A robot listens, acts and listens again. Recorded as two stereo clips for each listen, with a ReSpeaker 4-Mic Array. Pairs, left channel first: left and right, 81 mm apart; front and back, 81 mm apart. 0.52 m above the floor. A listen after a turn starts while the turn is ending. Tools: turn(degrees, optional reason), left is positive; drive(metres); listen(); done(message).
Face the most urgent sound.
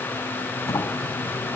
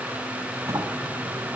listen()
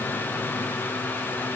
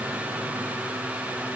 listen()
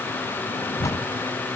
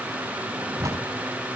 done("I can't make out anything urgent to turn to.")